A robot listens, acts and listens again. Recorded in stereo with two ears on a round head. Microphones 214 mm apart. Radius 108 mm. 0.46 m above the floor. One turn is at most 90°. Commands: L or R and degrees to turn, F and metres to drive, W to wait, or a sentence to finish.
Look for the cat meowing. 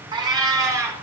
R30
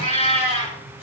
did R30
L30
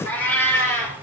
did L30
L10
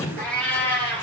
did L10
L10
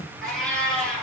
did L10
Found it: a cat meowing, straight ahead, over 4 m away.